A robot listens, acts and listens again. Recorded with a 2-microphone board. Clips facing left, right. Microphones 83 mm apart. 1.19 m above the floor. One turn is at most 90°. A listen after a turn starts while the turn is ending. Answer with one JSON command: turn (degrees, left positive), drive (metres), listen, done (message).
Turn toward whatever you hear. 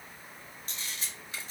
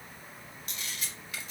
{"turn": 35}
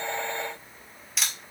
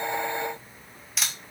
{"done": "Facing the camera shutter."}